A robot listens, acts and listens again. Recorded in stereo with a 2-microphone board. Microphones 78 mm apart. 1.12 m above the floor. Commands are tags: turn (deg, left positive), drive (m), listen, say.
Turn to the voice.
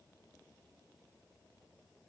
<listen/>
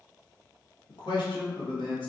<turn deg="90"/>
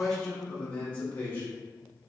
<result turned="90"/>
<turn deg="25"/>
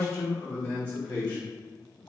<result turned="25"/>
<turn deg="30"/>
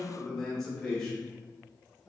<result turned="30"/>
<turn deg="10"/>
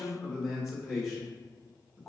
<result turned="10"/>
<say>Facing the man speaking, 1 to 2 m away.</say>